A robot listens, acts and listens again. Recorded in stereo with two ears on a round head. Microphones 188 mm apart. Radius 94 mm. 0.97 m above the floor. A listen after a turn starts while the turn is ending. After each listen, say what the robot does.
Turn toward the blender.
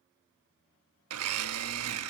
Turn 90° right.
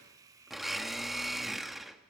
Found it: a blender, straight ahead.